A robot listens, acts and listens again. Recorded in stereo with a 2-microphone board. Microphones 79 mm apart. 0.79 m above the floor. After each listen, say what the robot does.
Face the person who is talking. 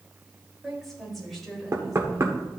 Turn 30° left.
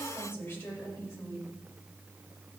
Turn 150° left.
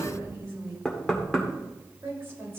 Turn 35° right.
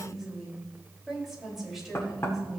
Found it: a woman speaking, straight ahead, over 4 m away.